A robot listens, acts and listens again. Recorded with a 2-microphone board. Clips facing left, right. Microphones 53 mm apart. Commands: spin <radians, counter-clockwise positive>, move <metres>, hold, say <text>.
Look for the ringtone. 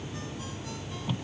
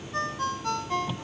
spin -1.13
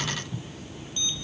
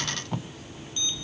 hold
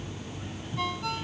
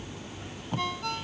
say Facing the ringtone.